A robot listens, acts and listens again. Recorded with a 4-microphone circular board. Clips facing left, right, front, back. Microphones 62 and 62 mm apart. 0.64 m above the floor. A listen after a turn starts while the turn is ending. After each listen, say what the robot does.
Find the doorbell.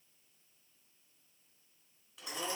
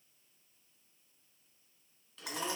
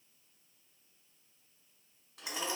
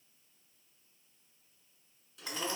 Keep listening.
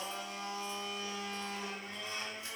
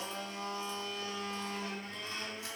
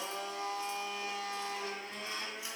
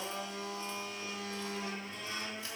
Keep listening.
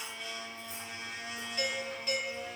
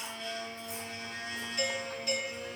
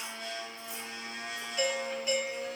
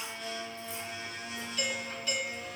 Turn 45° left.
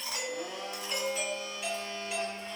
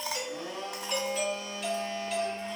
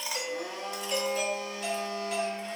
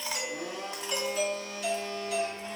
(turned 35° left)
Turn 10° left.
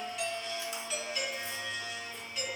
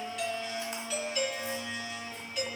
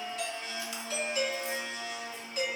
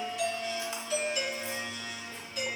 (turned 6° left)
Facing the doorbell.